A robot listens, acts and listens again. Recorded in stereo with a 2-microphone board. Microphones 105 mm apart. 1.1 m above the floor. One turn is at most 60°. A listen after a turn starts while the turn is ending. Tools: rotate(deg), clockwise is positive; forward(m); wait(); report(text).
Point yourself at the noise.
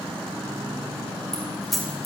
rotate(-30)
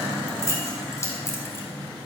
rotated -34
rotate(-60)
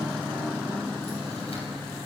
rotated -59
rotate(-60)
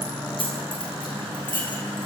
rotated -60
rotate(-50)
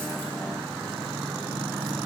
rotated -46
wait()
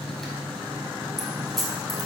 report("Found it: keys jangling, straight ahead, over 4 m away.")